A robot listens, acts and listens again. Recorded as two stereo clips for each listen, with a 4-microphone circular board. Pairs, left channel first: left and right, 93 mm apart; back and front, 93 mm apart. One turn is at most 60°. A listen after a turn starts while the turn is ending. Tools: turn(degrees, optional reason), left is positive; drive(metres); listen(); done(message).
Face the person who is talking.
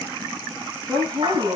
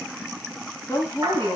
turn(degrees=-60, reason="The woman speaking: 125° right.")
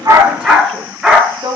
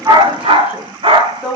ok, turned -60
turn(degrees=-60, reason="The woman speaking is now 75° right.")
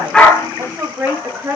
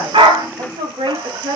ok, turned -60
turn(degrees=-20, reason="The woman speaking is now 20° right.")
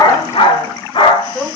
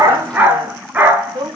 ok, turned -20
turn(degrees=10, reason="The woman speaking is now 10° left.")
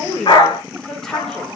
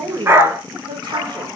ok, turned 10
done("Found it: a woman speaking, straight ahead.")